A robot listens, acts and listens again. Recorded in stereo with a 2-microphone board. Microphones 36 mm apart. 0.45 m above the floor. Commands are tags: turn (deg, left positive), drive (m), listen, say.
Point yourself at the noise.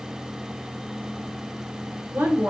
<turn deg="-65"/>
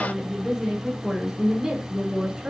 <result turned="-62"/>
<turn deg="-15"/>
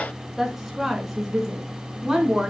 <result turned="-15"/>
<turn deg="-10"/>
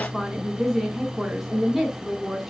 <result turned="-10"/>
<say>Found it: a woman speaking, straight ahead, 2 to 4 m away.</say>